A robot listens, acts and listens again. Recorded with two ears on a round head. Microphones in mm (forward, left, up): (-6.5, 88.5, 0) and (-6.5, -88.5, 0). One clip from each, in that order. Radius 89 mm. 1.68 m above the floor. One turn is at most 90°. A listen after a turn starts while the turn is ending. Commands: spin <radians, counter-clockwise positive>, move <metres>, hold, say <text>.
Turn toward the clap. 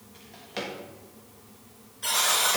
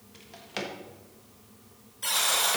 hold
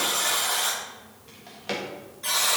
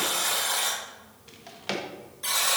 hold
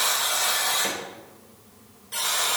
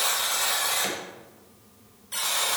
say I can't make out a clap, only a buzzer and a drawer.